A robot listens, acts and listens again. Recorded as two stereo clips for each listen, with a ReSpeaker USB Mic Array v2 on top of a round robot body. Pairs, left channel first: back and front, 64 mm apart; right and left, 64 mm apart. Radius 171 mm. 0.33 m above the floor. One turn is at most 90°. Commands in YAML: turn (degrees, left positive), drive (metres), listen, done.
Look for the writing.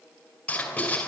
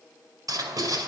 turn: 90
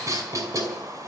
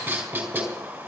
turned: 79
turn: 30
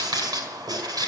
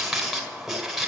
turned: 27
done: "Found it: writing, straight ahead, over 4 m away."